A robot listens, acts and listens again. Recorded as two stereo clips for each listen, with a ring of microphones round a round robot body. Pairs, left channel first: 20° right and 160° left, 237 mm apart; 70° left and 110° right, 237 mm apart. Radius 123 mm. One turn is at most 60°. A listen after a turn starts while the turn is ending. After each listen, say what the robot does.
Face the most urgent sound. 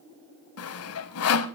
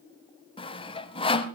Keep listening.
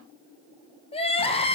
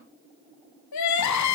Turn 45° left.
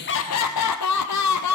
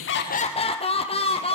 Facing the crying.